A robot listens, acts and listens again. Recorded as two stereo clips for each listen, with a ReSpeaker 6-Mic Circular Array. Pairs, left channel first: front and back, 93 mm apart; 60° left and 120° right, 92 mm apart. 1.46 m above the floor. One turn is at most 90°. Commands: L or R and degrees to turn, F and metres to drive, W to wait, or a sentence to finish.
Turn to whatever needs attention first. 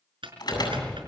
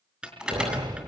R40
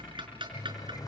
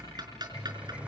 W
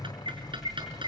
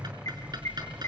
W
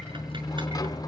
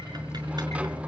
I heard an alarm from this way, but can't make it out now.